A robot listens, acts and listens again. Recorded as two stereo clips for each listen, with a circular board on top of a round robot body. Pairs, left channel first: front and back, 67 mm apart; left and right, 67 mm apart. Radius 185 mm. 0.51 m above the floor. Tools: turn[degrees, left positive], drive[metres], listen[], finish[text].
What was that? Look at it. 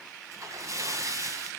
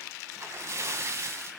Thought: The splash: 140° right.
Action: turn[-140]
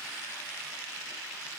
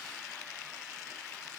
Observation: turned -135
Action: finish[Facing where the splash came from. I can't hear it now.]